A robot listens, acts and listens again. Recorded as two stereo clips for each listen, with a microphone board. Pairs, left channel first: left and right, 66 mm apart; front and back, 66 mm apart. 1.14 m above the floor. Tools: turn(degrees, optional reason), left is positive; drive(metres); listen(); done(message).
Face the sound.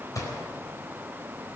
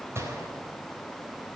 turn(degrees=130, reason="The gunshot: 130° left.")
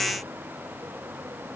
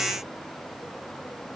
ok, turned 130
done("I heard a gunshot from this way, but can't make it out now.")